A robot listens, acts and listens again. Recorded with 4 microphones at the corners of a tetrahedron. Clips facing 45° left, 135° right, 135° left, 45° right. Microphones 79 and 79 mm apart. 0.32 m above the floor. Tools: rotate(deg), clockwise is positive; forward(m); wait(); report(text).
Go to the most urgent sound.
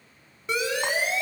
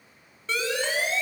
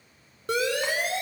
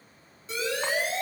rotate(-120)
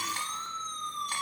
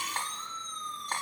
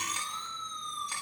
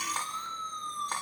rotate(-25)
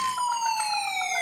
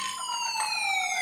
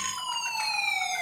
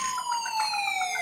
rotate(-10)
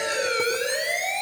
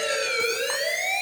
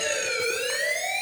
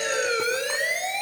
forward(1.0)
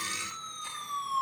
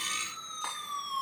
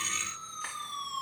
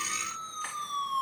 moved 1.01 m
forward(1.0)
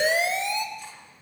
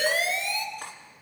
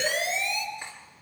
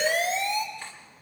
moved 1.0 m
rotate(10)
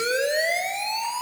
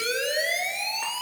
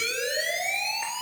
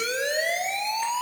forward(1.0)
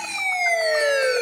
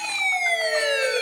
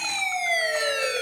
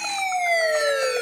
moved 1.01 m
forward(1.0)
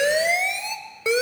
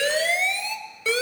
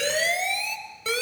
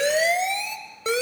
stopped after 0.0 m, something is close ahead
report("Arrived at the siren, straight ahead.")